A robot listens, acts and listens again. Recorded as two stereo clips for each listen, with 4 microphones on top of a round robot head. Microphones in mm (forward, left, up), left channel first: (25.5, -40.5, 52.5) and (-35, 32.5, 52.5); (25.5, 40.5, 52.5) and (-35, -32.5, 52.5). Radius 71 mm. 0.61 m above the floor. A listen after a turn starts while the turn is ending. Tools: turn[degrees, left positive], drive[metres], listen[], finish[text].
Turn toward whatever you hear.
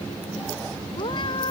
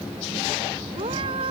Thought: The cat meowing: 90° right.
Action: turn[-90]
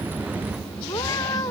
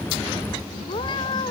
Action: finish[Found it: a cat meowing, straight ahead.]